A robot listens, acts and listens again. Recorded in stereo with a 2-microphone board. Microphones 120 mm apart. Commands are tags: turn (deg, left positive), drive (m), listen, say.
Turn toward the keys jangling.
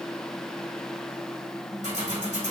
<turn deg="-90"/>
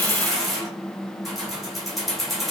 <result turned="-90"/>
<say>Facing the keys jangling.</say>